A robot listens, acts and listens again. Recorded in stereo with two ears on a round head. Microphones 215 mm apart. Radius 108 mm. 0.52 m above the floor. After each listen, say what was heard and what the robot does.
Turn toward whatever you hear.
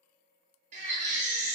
The baby crying: about 30° right or 150° right. Turn 30° right.
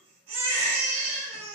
So it is at 115° right. Turn 115° right.
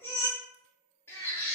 The baby crying is now 10° left. Turn 10° left.
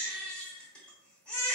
Found it: a baby crying, straight ahead, under 1 m away.